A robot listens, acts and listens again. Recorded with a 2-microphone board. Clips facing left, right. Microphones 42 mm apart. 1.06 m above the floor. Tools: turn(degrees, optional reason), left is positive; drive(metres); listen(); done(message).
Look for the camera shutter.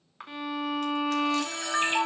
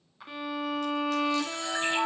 turn(degrees=50, reason="The camera shutter: about 50° left or 130° left.")
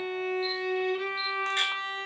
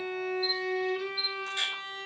listen()
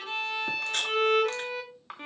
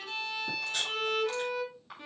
turn(degrees=75, reason="So it is at 75° left.")
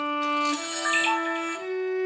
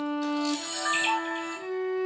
turn(degrees=40, reason="The camera shutter is now 40° left.")
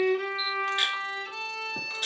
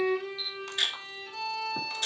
turn(degrees=10, reason="The camera shutter is now 10° left.")
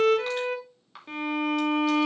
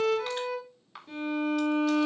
listen()
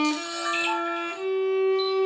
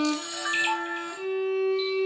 done("Found it: a camera shutter, straight ahead.")